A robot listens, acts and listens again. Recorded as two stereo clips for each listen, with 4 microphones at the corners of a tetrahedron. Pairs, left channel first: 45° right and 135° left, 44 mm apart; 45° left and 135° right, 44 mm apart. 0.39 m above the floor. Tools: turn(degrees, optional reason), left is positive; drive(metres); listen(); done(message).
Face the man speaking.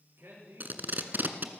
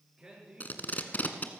turn(degrees=155, reason="The man speaking: 155° left.")
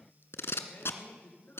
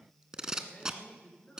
turn(degrees=-15, reason="The man speaking is now 15° right.")
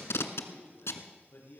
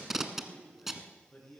turn(degrees=-10, reason="The man speaking is now 10° right.")
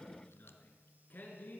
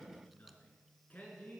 done("Facing the man speaking.")